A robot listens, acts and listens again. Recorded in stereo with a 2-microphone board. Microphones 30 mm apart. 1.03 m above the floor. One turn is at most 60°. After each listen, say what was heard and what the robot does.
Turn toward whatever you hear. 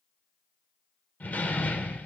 The door slam: about 60° left or 120° left. Turn 60° left.
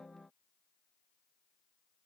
Keep listening.
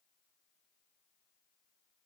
I heard a door slam, but can't make it out now. It was about straight ahead or 60° left.